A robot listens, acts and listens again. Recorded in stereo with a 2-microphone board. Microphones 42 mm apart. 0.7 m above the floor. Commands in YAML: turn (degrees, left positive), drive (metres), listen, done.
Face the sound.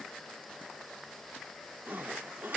turn: -55
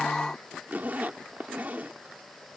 turn: -55
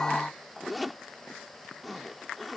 done: "Found it: a zipper, straight ahead."